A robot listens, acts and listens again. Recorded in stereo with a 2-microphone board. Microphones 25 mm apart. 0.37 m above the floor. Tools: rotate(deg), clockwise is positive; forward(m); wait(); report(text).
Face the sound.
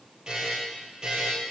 rotate(35)
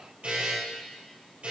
rotate(110)
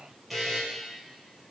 report("Facing the buzzer, 2 to 4 m away.")